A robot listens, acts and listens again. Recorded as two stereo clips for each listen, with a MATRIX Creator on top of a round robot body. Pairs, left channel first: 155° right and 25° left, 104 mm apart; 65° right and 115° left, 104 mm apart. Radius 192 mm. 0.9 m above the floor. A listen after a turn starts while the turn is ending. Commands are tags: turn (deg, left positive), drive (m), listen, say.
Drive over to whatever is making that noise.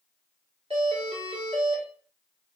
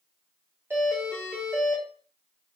<turn deg="45"/>
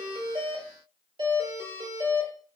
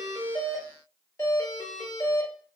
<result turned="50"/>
<drive m="1.0"/>
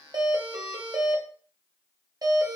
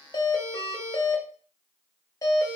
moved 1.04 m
<turn deg="-20"/>
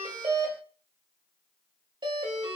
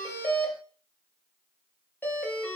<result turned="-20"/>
<drive m="1.0"/>
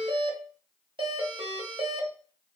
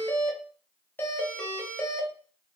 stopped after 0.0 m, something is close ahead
<say>Arrived at the doorbell, straight ahead.</say>